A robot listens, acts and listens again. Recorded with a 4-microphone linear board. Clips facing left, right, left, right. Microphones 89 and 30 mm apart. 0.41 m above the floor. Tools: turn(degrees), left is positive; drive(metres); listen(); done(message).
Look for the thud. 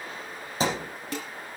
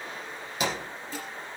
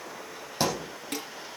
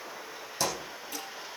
turn(degrees=30)
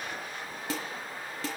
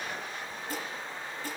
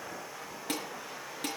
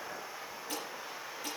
listen()
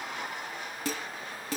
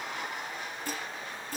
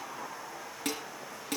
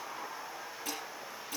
done("I heard a thud, but can't make it out now. It was about straight ahead or 120° left.")